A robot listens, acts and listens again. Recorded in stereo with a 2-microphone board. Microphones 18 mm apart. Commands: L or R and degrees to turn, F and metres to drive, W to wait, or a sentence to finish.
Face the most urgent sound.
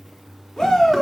L35
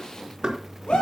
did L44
L105
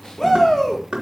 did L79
L25
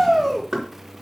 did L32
Facing the shout, over 4 m away.